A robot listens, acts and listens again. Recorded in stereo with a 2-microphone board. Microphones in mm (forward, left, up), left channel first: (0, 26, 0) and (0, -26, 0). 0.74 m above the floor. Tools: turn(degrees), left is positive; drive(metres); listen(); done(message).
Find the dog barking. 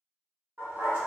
turn(degrees=-45)
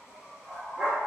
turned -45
turn(degrees=-20)
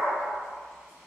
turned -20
done("Found it: a dog barking, straight ahead, 1 to 2 m away.")